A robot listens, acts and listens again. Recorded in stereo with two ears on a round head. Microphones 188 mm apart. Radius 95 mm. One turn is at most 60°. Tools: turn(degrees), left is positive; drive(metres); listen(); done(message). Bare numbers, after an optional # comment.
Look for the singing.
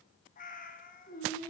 # The singing: about 35° left or 145° left.
turn(35)
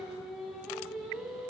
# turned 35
done("Facing the singing, over 4 m away.")